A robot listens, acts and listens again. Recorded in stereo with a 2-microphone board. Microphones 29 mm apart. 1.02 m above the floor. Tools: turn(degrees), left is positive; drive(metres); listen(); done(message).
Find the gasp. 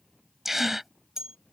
turn(degrees=-30)
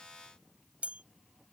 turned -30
listen()
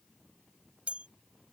done("I heard a gasp, but can't make it out now. It was about 25° left or 145° right.")